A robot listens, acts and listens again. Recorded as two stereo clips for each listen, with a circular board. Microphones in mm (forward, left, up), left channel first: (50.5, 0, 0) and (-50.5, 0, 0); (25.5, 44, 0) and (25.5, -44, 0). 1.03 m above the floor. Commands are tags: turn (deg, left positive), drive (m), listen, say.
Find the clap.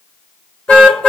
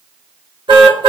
<listen/>
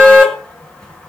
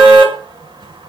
<listen/>
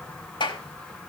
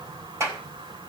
<turn deg="-35"/>
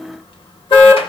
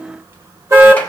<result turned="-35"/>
<listen/>
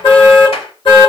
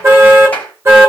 <turn deg="15"/>
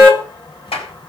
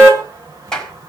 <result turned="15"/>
<turn deg="10"/>
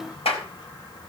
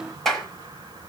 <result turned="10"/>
<say>Facing the clap, over 4 m away.</say>